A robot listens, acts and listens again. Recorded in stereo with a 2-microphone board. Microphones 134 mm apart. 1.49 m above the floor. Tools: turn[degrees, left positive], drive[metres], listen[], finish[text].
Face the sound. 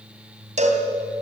Thought: The cowbell: about 60° right or 120° right.
Action: turn[-60]
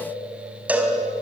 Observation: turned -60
Thought: So it is at 15° right.
Action: turn[-15]
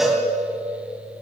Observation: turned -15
Action: finish[Facing the cowbell.]